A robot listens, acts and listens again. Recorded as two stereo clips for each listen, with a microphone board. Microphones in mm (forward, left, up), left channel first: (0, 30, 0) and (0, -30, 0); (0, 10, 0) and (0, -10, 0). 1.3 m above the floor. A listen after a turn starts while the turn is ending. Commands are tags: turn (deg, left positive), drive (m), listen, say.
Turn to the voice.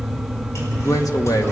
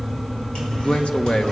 <turn deg="90"/>
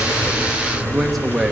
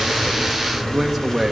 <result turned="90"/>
<say>Facing the man speaking, 1 to 2 m away.</say>